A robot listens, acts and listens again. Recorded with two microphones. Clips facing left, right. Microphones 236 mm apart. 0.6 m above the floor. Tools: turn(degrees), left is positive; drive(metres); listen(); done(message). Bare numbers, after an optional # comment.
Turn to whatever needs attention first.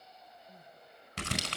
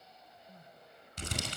# The crying: about 20° left or 160° left.
turn(20)
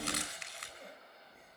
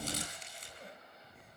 done("Found it: crying, straight ahead, 1 to 2 m away.")